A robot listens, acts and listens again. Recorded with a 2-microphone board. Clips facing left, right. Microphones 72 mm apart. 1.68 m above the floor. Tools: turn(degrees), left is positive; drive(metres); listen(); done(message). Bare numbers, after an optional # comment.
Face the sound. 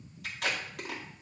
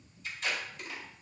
turn(90)
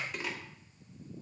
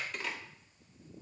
# So it is at 10° left.
turn(10)
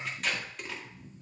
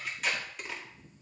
done("Found it: tape being pulled, straight ahead, 1 to 2 m away.")